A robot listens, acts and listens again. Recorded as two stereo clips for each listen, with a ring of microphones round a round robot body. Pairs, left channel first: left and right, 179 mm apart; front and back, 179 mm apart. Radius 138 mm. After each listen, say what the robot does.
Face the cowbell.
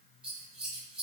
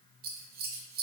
Keep listening.
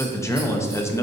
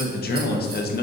Keep listening.
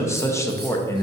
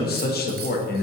I can't make out a cowbell, only scissors and a man speaking.